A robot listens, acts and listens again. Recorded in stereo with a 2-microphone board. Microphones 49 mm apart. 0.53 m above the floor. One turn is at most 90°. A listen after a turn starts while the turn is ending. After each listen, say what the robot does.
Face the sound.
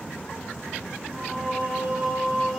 Turn 30° right.
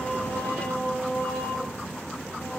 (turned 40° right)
Turn 50° left.
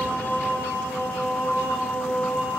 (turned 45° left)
Turn 50° left.
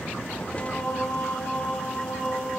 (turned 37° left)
Turn 25° left.
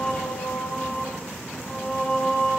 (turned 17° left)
Turn 10° left.
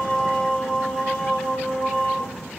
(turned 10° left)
Found it: singing, straight ahead.